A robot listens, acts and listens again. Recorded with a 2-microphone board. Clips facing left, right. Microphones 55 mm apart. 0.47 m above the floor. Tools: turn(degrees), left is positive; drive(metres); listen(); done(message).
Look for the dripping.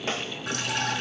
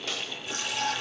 turn(degrees=65)
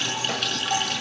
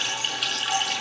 done("Found it: dripping, straight ahead, over 4 m away.")